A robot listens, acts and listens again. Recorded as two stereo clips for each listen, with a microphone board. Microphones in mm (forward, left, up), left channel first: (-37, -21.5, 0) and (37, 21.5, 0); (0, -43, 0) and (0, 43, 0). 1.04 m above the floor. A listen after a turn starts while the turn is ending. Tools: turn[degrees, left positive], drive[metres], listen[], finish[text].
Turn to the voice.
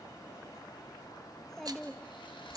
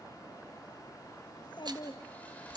Thought: The child speaking: 65° right.
Action: turn[-65]
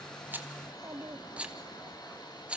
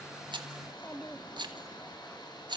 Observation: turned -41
Thought: The child speaking is now 25° right.
Action: turn[-25]
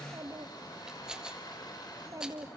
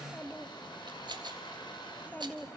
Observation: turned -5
Thought: The child speaking is now 20° right.
Action: turn[-20]
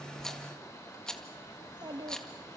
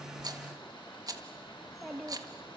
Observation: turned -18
Action: finish[Facing the child speaking, 1 to 2 m away.]